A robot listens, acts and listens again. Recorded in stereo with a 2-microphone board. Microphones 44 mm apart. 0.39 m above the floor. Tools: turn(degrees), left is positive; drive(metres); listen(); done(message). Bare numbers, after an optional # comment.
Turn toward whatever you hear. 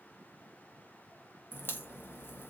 # The crack: about 50° left or 130° left.
turn(50)
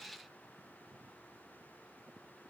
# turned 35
listen()
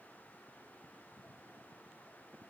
done("I heard a crack, but can't make it out now. It was about 15° left or 95° left.")